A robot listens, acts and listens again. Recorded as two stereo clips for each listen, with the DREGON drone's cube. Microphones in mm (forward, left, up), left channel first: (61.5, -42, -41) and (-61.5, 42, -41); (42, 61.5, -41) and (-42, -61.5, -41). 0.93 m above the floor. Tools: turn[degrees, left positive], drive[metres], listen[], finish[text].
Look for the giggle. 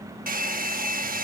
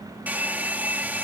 Action: listen[]
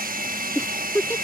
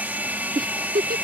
Thought: The giggle: 110° right.
Action: turn[-110]
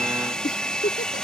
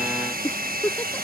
Thought: The giggle is now 25° right.
Action: turn[-25]
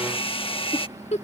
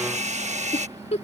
Thought: The giggle is now 10° left.
Action: turn[10]
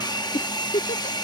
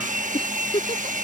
Action: finish[Found it: a giggle, straight ahead.]